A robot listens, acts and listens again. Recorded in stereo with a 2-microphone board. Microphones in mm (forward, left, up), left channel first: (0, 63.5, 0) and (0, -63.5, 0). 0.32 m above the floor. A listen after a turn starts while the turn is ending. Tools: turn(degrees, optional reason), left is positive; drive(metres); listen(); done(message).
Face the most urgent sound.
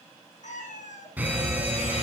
turn(degrees=-30)
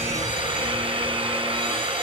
turn(degrees=-135, reason="So it is at 135° right.")
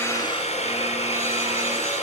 listen()
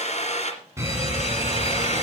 turn(degrees=-25, reason="The fire alarm is now 25° right.")
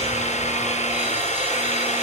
turn(degrees=-15, reason="The fire alarm is now 15° right.")
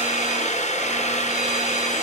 listen()
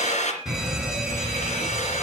done("Facing the fire alarm.")